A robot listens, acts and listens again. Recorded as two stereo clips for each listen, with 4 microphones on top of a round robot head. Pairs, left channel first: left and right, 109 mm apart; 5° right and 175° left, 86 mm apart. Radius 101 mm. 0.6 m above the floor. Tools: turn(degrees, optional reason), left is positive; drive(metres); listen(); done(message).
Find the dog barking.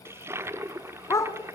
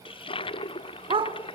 turn(degrees=155, reason="The dog barking: 155° left.")
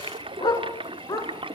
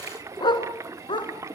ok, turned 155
turn(degrees=25, reason="The dog barking is now 25° left.")
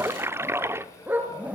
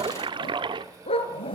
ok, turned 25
turn(degrees=-15, reason="The dog barking is now 15° right.")
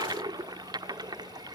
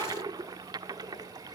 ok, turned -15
listen()
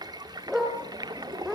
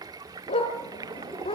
done("Found it: a dog barking, straight ahead.")